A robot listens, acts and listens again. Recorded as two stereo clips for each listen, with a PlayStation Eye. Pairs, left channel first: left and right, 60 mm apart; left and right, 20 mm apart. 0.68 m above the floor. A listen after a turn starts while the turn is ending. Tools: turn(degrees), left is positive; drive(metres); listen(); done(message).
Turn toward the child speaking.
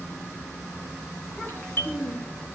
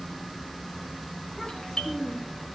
turn(degrees=30)
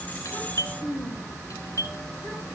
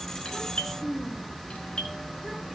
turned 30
turn(degrees=150)
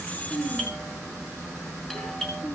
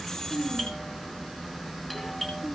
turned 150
turn(degrees=55)
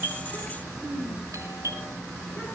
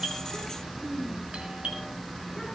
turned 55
turn(degrees=-20)
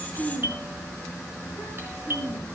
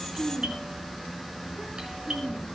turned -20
done("Facing the child speaking.")